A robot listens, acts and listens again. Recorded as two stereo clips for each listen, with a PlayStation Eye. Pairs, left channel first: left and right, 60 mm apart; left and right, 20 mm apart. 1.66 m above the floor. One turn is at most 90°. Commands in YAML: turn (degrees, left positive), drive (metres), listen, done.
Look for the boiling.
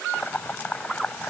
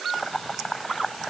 turn: 25
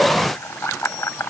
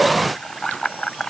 turn: 90
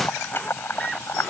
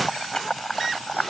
turn: 40
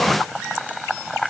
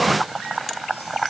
done: "Facing the boiling."